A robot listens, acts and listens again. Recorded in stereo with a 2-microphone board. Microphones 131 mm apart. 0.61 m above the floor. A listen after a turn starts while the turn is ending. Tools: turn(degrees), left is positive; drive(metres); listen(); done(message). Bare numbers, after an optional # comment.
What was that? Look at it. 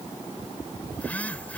turn(30)
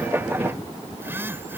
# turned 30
# So it is at 20° right.
turn(-20)
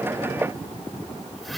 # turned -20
done("Facing the phone buzzing.")